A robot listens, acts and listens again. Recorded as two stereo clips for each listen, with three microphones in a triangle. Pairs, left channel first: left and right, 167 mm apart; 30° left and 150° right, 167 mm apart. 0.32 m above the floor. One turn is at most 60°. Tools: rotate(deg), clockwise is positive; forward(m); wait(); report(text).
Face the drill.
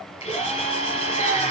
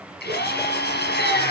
rotate(-35)
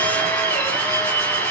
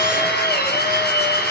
rotate(-10)
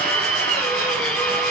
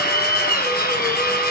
report("Found it: a drill, straight ahead.")